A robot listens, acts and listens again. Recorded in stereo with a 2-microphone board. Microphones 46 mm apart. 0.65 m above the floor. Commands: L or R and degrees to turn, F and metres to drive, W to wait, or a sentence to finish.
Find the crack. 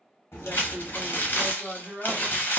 L90
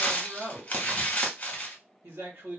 Facing where the crack came from. I can't hear it now.